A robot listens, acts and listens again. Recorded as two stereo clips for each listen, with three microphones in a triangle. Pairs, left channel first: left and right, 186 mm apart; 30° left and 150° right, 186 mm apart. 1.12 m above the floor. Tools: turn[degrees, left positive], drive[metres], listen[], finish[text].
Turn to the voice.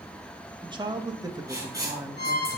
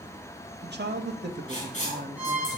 Thought: The man speaking: 160° right.
Action: turn[-160]
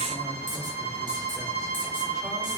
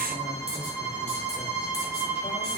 Action: listen[]
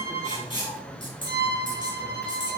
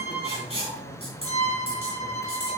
Action: listen[]
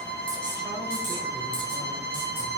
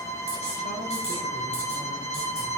Action: finish[I heard a man speaking from this way, but can't make it out now.]